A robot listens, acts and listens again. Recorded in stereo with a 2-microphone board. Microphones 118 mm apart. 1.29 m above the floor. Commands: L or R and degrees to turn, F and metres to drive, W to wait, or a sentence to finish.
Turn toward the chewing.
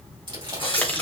R45
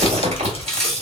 R90
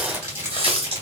R30
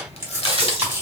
R25
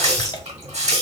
W
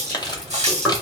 Found it: chewing, straight ahead, 1 to 2 m away.